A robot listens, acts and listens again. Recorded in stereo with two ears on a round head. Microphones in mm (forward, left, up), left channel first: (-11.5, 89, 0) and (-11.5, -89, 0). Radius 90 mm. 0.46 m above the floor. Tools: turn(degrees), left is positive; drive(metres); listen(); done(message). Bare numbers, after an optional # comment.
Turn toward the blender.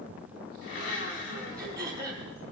# The blender: about 70° left or 110° left.
turn(70)
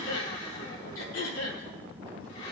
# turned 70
listen()
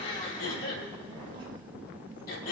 # So it is at 35° left.
turn(35)
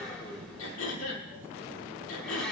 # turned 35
done("Facing the blender, 2 to 4 m away.")